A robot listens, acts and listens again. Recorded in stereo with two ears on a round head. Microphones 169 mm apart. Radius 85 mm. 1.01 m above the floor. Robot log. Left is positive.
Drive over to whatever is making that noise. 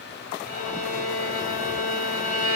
note: The violin: about 50° left or 130° left.
cmd yaw +50
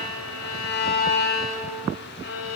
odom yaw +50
note: So it is at 75° left.
cmd yaw +75
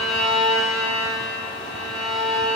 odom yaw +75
cmd fwd 1.0
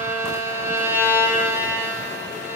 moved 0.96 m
note: The violin is now 10° right.
cmd yaw -10
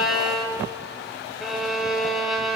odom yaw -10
cmd fwd 1.0
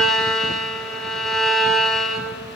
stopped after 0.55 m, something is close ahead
end: I am next to the violin.